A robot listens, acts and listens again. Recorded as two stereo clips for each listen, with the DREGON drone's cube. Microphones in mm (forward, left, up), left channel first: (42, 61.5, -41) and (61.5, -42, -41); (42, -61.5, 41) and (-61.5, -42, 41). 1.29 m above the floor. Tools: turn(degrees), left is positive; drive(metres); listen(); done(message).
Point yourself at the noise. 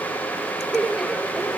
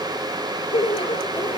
turn(degrees=10)
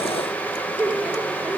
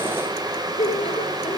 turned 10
done("Found it: laughter, straight ahead.")